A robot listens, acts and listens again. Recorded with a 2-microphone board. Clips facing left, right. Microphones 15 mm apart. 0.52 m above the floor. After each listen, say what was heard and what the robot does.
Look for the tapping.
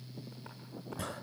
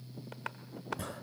The tapping: about 65° right or 115° right. Turn 65° right.
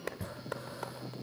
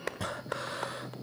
So it is at 20° right. Turn 20° right.
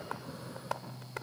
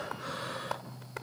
Facing the tapping.